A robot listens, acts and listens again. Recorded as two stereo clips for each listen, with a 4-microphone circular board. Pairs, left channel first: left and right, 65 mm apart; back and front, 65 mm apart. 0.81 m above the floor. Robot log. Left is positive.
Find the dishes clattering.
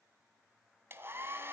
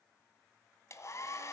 cmd idle
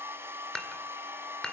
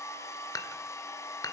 note: The dishes clattering: 170° left.
cmd yaw +170
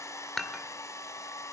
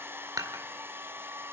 end: Facing the dishes clattering.